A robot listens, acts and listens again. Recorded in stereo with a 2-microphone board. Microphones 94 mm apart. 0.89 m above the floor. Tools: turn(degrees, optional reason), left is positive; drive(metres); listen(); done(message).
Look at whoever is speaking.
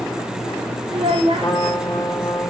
turn(degrees=-90)
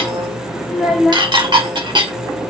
done("Facing the child speaking, 2 to 4 m away.")